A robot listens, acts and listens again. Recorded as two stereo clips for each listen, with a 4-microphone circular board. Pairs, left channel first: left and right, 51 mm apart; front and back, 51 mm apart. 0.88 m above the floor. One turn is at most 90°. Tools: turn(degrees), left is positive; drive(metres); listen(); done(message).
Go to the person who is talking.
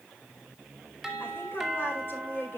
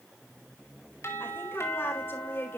turn(degrees=45)
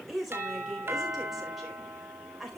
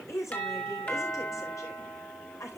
drive(metres=1.0)
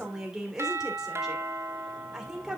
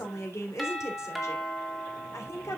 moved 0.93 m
turn(degrees=-10)
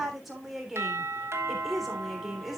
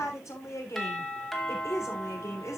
drive(metres=1.0)
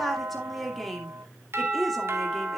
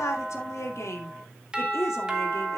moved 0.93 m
drive(metres=1.0)
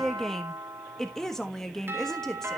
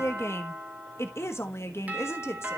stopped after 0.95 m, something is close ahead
turn(degrees=10)
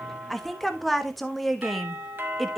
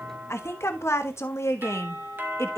done("I am next to the woman speaking.")